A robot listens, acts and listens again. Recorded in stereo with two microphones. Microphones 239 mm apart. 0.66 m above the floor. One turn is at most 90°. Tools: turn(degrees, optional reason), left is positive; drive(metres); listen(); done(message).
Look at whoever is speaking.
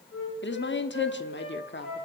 turn(degrees=50, reason="The woman speaking: about 50° left or 130° left.")
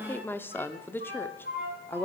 turn(degrees=10, reason="So it is at 10° left.")
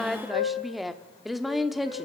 done("Facing the woman speaking.")